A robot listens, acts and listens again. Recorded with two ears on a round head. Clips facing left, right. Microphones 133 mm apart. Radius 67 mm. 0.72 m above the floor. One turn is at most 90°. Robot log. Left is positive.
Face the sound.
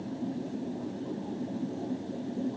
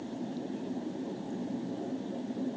cmd idle
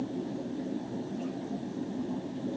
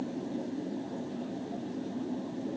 cmd idle
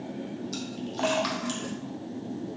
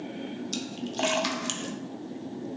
note: The splash: about 30° right or 150° right.
cmd yaw -30
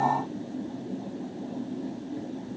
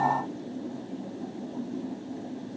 cmd idle
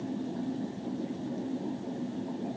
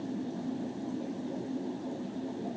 end: I heard a splash, but can't make it out now. It was about straight ahead or 120° right.